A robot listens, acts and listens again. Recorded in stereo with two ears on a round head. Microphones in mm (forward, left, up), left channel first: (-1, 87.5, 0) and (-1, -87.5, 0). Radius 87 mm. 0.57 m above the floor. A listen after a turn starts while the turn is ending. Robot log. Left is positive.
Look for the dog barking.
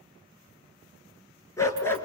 cmd yaw +30
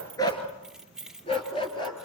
note: The dog barking: about 25° left or 155° left.
cmd yaw +25
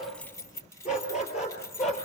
note: So it is at 145° left.
cmd yaw +145
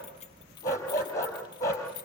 note: The dog barking is now 15° left.
cmd yaw +15
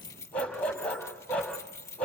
end: Found it: a dog barking, straight ahead, over 4 m away.